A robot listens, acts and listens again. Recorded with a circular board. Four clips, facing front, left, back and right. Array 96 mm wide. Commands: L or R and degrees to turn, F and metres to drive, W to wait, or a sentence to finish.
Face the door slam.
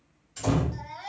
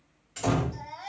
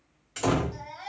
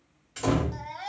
R175
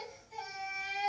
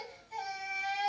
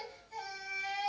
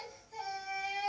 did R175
Facing where the door slam came from. I can't hear it now.